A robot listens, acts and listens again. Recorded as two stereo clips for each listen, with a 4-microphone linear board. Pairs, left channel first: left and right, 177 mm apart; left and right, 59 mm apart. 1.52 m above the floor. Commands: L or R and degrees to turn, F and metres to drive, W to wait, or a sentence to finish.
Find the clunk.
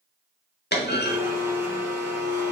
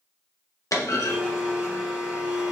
L70
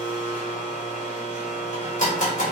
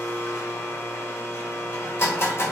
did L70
W
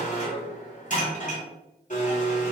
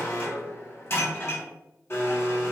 I heard a clunk, but can't make it out now. It was about straight ahead or 40° left.